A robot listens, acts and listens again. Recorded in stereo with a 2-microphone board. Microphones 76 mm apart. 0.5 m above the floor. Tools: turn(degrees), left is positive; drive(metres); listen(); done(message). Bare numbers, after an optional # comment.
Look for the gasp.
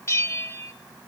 listen()
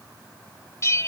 listen()
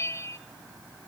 done("I can't make out a gasp to turn to.")